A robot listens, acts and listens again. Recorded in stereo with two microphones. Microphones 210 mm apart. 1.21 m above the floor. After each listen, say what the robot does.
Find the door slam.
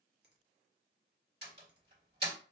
Turn 50° right.
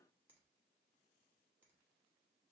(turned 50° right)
Keep listening.
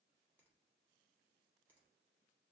I heard a door slam, but can't make it out now. It was about straight ahead or 80° right.